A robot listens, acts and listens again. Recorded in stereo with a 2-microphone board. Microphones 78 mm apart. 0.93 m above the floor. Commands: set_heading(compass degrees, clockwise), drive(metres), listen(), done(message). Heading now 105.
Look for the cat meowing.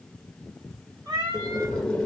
set_heading(170)
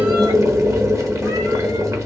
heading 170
listen()
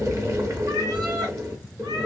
set_heading(245)
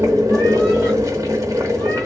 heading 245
listen()
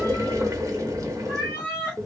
set_heading(265)
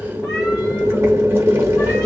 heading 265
listen()
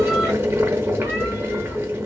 listen()
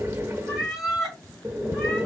done("Facing the cat meowing.")